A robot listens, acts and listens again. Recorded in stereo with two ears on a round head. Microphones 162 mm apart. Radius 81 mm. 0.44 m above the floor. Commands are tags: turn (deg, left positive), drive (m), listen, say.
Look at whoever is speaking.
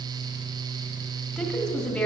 <turn deg="30"/>
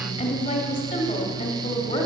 <turn deg="145"/>
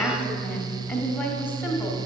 <turn deg="10"/>
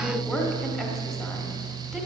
<say>Facing the woman speaking, 1 to 2 m away.</say>